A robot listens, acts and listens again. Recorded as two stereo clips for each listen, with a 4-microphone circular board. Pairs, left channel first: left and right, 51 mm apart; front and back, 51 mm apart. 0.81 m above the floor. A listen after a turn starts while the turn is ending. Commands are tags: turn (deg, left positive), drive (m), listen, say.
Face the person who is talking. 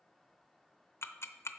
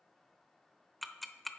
<listen/>
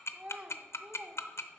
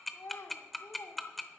<turn deg="-25"/>
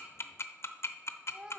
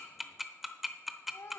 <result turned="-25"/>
<turn deg="-20"/>
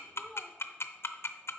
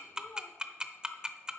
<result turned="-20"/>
<listen/>
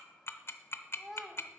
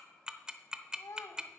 <say>Facing the child speaking.</say>